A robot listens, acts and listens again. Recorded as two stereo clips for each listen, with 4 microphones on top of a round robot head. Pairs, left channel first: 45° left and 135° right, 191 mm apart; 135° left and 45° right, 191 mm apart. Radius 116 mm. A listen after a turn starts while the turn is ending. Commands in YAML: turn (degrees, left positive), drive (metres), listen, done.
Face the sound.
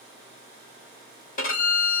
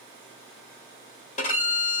turn: 85
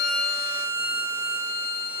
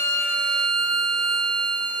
turn: 15
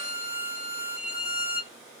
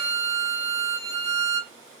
done: "Facing the violin."